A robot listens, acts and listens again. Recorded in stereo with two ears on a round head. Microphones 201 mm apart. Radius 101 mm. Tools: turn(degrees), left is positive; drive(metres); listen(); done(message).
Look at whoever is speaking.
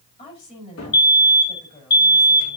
turn(degrees=30)
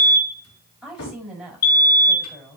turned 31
done("Found it: a woman speaking, straight ahead, over 4 m away.")